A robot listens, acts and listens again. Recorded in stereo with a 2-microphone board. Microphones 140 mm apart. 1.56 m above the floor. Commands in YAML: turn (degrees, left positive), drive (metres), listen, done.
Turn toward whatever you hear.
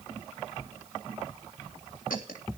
turn: 90
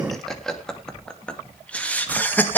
turn: 15
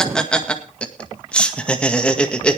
turn: 10
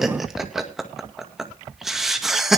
done: "Found it: laughter, straight ahead, 2 to 4 m away."